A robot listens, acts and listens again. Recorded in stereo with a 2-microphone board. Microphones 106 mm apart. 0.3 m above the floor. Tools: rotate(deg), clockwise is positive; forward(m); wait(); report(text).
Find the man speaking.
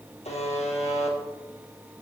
wait()
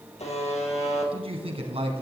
rotate(60)
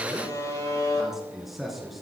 report("Facing the man speaking.")